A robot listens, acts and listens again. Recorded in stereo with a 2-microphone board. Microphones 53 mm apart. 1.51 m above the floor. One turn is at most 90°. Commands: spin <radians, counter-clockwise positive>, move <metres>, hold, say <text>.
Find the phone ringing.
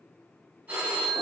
spin -0.52
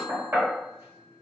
hold
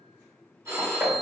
spin -1.57
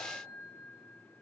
spin -0.44
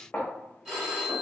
spin -0.26
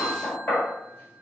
hold
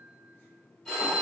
say Found it: a phone ringing, straight ahead.